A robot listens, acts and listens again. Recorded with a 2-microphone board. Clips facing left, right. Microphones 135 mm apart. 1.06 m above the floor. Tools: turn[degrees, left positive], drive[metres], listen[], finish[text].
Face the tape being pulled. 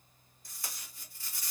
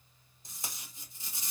Thought: The tape being pulled: about 20° right or 160° right.
Action: turn[-20]
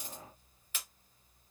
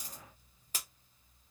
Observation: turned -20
Thought: So it is at 140° right.
Action: turn[-140]
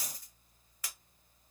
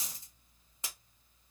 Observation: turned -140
Thought: The tape being pulled is now 25° right.
Action: turn[-25]
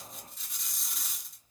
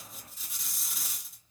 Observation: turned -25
Action: finish[Found it: tape being pulled, straight ahead, under 1 m away.]